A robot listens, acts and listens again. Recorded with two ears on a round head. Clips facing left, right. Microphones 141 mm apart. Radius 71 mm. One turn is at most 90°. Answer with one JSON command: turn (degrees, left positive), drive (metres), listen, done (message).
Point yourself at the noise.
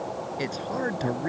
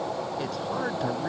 {"turn": 15}
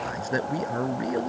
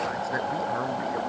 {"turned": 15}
{"turn": 90}
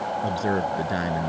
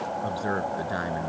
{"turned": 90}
{"turn": 25}
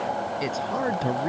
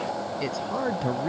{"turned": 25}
{"done": "Found it: a man speaking, straight ahead."}